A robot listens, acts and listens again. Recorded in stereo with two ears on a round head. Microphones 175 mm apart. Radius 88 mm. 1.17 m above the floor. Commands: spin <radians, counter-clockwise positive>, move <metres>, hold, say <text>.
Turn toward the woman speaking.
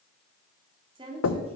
spin -0.52
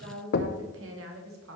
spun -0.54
spin -1.75
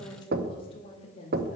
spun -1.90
spin 0.61
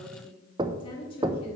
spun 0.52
spin 0.52
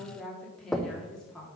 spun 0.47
say Facing the woman speaking.